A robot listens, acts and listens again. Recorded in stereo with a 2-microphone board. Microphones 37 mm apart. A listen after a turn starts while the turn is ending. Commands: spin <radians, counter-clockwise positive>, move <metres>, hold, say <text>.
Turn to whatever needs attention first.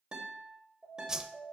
spin 0.52
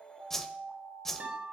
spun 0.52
spin -0.35
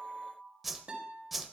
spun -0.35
say Found it: an alarm, straight ahead.